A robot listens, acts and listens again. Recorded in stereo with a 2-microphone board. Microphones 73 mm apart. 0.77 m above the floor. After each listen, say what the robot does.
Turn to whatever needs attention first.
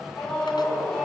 Turn 30° left.
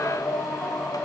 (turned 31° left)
Turn 140° left.
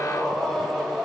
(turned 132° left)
Facing the scream.